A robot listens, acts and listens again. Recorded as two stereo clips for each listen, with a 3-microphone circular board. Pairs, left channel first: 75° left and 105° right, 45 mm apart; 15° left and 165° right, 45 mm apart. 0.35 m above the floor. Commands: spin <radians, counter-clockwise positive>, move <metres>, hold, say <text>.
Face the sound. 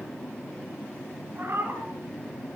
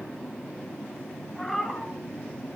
spin -1.22
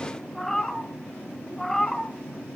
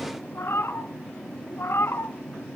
spin -0.17
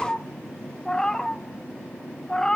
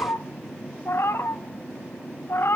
say Facing the cat meowing.